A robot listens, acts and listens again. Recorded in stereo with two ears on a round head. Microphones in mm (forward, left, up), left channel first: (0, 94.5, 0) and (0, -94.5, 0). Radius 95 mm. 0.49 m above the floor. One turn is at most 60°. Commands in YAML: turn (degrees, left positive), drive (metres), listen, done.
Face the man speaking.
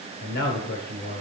turn: 45
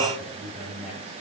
done: "Facing the man speaking, 2 to 4 m away."